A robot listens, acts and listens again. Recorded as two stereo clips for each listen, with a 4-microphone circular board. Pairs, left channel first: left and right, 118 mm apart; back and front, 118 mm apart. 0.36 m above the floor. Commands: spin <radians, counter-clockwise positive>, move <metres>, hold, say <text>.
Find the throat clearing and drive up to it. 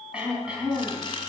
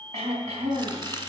spin -0.17
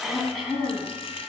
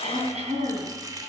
move 1.0
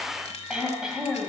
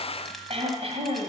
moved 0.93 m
move 1.0
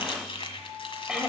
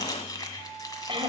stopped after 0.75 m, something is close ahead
say Arrived at the throat clearing, straight ahead.